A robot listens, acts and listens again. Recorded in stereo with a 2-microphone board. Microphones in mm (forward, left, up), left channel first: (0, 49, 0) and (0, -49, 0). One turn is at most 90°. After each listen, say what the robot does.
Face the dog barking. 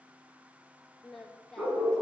Turn 30° right.
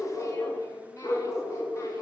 Turn 35° left.
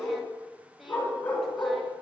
Turn 20° left.
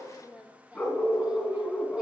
Turn 15° left.
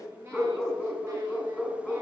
Facing the dog barking.